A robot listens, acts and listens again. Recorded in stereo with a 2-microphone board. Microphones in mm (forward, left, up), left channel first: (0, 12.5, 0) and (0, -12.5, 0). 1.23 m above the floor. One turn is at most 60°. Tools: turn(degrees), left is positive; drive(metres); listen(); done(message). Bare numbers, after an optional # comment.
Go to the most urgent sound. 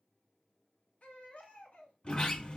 # The baby crying: about 65° left or 115° left.
turn(60)
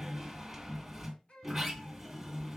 # So it is at 55° left.
turn(55)
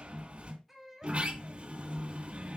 drive(1.0)
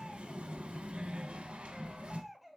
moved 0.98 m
drive(1.0)
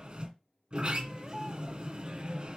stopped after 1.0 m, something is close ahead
listen()
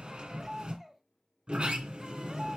done("Arrived at the baby crying, straight ahead.")